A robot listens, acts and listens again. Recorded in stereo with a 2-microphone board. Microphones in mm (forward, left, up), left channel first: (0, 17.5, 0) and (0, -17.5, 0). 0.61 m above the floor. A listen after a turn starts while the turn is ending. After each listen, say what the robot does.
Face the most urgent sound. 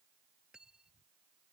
Keep listening.
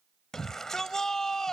Turn 30° left.
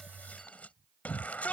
Turn 135° left.
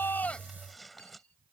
Keep listening.
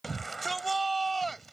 Facing the shout.